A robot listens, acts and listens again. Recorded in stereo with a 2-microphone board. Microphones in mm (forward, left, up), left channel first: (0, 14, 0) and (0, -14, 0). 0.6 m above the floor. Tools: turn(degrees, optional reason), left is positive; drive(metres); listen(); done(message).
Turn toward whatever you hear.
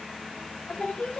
turn(degrees=60, reason="The singing: about 60° left or 120° left.")
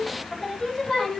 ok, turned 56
turn(degrees=20, reason="So it is at 20° left.")
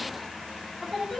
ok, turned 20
turn(degrees=10, reason="The singing is now 10° left.")
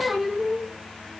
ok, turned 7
done("Found it: singing, straight ahead.")